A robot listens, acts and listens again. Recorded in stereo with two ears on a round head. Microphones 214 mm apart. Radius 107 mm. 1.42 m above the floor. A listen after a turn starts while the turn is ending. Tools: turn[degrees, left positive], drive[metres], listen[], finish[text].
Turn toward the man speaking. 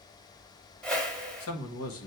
Thought: The man speaking: about 60° left or 120° left.
Action: turn[60]
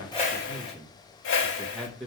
Action: finish[Found it: a man speaking, straight ahead.]